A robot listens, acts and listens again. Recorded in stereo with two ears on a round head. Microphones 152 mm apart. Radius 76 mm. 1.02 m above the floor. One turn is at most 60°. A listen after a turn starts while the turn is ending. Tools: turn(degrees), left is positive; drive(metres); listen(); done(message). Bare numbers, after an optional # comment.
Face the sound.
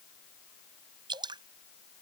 # The dripping: about 25° right or 155° right.
turn(-25)
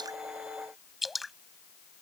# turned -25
done("Found it: dripping, straight ahead.")